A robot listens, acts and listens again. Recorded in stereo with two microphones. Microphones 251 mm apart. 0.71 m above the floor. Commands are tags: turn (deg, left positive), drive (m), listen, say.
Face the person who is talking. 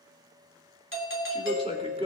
<turn deg="-25"/>
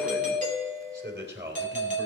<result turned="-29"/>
<turn deg="-135"/>
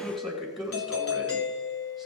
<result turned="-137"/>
<say>Facing the man speaking.</say>